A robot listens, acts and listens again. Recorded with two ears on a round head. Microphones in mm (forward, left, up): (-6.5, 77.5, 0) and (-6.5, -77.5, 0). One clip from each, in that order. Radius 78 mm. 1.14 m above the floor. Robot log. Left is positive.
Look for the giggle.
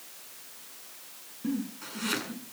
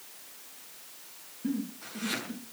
note: The giggle: about 30° left or 150° left.
cmd yaw +30
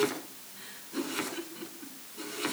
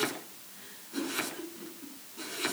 note: So it is at 120° left.
cmd yaw +120
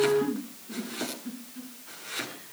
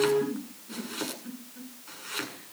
note: The giggle is now 25° right.
cmd yaw -25
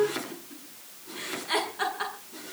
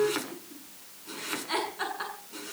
end: Found it: a giggle, straight ahead, over 4 m away.